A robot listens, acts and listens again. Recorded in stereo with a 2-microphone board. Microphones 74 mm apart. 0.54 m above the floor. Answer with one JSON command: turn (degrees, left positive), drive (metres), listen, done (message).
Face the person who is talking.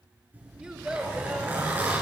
{"turn": -30}
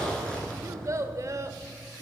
{"turn": -135}
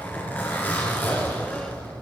{"listen": true}
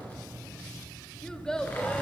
{"turn": 10}
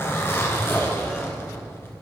{"listen": true}
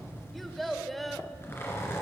{"done": "Facing the child speaking, under 1 m away."}